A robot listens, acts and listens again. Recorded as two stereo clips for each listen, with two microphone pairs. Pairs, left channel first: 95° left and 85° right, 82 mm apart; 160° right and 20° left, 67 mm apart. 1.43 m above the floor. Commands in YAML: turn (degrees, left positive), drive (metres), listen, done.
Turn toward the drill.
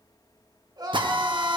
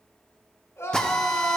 turn: -80
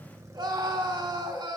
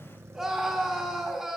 listen: true
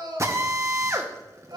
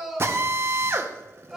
turn: -30
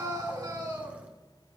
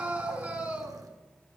listen: true
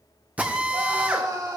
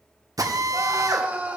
turn: -10
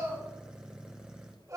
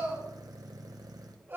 listen: true
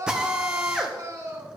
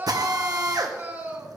done: "Found it: a drill, straight ahead, 1 to 2 m away."